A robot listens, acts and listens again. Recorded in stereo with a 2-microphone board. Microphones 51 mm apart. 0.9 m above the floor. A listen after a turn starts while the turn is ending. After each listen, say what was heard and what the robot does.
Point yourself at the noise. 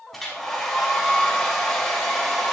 Turn 30° left.
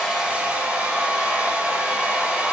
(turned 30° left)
So it is at 30° right. Turn 30° right.
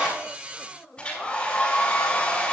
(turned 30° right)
The hair dryer is now 20° left. Turn 20° left.
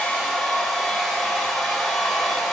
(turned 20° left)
Found it: a hair dryer, straight ahead.